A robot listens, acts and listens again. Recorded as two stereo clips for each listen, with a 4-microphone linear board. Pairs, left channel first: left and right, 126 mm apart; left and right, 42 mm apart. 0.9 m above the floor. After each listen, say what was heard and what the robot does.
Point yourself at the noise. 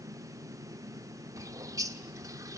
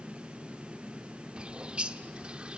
The bird: about 25° right or 155° right. Turn 25° right.
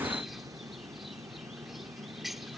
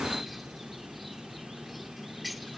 Facing the bird, under 1 m away.